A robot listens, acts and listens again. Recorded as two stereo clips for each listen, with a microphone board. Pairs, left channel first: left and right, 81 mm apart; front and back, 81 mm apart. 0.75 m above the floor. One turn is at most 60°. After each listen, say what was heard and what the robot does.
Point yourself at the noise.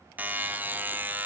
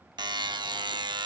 The buzzer: 155° right. Turn 60° right.
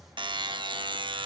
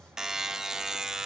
The buzzer is now 95° right. Turn 60° right.
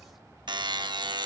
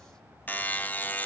The buzzer is now 70° right. Turn 60° right.
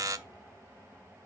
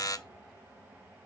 The buzzer is now 45° right. Turn 45° right.
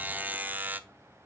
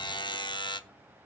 The buzzer is now 20° right. Turn 20° right.
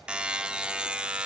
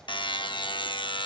The buzzer is now 10° right. Turn 10° right.
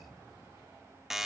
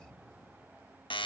Facing the buzzer, under 1 m away.